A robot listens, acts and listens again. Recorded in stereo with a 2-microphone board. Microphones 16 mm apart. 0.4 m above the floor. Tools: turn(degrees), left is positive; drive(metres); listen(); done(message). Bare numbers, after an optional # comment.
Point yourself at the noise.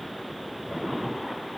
listen()
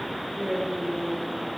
turn(-90)
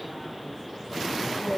# So it is at 20° left.
turn(20)
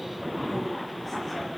listen()
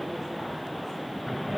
listen()
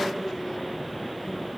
done("Facing the woman speaking.")